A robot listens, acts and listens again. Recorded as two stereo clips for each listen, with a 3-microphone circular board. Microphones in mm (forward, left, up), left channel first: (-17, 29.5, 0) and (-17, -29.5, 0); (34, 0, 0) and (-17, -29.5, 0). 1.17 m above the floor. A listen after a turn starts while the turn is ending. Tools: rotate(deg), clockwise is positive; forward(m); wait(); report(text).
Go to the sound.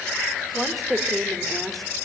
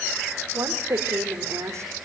rotate(-175)
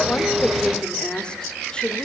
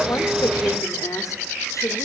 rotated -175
rotate(-15)
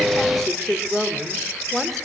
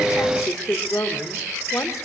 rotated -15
forward(1.0)
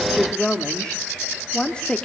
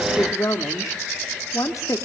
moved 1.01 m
rotate(-15)
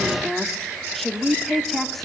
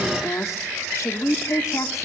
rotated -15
forward(1.0)
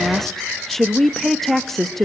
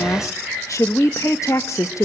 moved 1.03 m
forward(1.0)
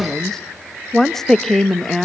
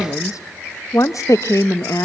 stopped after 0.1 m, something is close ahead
report("Arrived at the woman speaking, straight ahead.")